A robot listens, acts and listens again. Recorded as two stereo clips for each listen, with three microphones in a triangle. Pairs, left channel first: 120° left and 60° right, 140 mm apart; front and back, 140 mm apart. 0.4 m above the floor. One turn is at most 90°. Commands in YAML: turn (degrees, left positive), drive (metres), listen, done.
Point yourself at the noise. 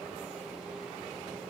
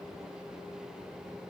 listen: true
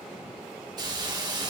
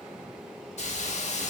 done: "Facing the hiss, under 1 m away."